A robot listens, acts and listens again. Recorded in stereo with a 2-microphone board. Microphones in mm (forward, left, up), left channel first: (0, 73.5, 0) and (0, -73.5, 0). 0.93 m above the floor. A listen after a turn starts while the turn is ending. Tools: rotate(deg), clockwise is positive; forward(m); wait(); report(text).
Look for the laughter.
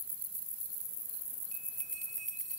wait()
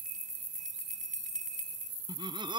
rotate(30)
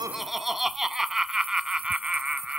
report("Found it: laughter, straight ahead.")